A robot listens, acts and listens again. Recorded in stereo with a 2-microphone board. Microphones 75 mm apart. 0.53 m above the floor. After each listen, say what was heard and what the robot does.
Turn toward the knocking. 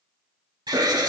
Keep listening.
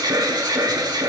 Keep listening.
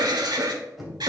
Turn 30° left.
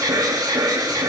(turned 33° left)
Keep listening.
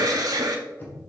So it is at 150° left. Turn 150° left.
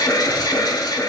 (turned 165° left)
Nothing new. It was at 15° right. Turn 15° right.
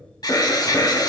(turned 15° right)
Keep listening.
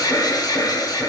Facing where the knocking came from. I can't hear it now.